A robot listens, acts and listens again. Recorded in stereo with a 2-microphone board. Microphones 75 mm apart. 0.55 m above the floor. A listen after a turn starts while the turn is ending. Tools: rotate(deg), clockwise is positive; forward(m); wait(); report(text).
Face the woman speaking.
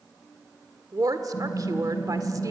rotate(55)
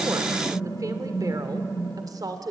rotate(60)
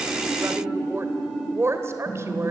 rotate(40)
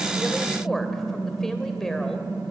report("Facing the woman speaking, 2 to 4 m away.")